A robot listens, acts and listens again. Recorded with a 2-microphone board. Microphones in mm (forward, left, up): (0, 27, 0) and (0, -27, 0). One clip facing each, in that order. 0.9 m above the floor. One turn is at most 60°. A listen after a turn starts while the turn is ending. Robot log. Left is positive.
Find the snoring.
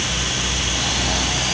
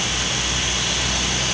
cmd idle
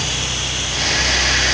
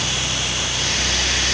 cmd idle
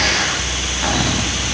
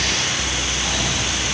end: I can't make out snoring to turn to.